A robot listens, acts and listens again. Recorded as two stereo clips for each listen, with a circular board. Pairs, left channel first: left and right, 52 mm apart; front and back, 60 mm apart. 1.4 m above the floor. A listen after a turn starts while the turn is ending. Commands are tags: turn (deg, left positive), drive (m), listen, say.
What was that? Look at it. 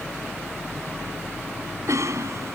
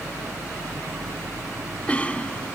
<turn deg="-70"/>
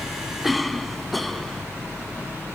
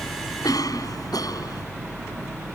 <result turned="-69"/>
<say>Found it: a cough, straight ahead.</say>